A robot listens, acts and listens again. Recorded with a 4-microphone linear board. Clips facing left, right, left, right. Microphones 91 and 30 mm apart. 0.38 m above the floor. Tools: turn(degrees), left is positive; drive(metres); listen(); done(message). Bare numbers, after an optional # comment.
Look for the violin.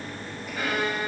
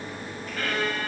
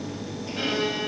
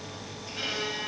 turn(30)
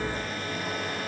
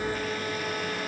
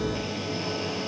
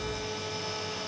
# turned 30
listen()
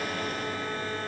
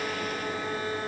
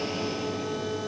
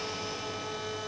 listen()
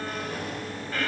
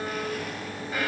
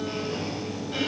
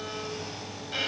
# So it is at 15° right.
turn(-15)
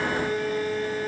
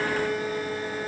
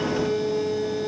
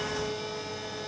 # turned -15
done("Facing the violin, 1 to 2 m away.")